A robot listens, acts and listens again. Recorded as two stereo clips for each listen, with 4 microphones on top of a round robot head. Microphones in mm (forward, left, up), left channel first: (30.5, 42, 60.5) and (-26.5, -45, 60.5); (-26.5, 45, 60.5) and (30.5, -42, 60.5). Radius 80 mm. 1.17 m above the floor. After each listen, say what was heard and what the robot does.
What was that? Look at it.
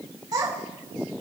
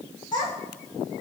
The child speaking: 175° left. Turn 175° left.
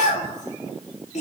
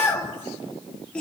The child speaking is now 45° left. Turn 45° left.
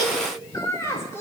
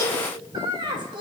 The child speaking is now 10° right. Turn 10° right.
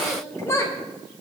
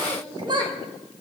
The child speaking is now 10° right. Turn 10° right.
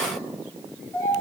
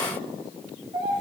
The child speaking is now 10° right. Turn 10° right.
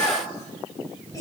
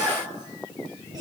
Keep listening.
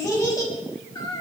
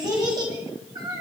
Facing the child speaking, 2 to 4 m away.